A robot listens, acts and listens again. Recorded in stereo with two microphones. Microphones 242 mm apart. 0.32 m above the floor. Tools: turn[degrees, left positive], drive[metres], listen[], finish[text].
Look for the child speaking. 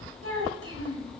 Thought: The child speaking: about 60° right or 120° right.
Action: turn[-60]
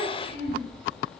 Thought: So it is at 40° right.
Action: turn[-40]
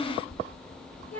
Thought: The child speaking is now 10° left.
Action: turn[10]
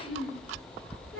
Action: finish[Found it: a child speaking, straight ahead.]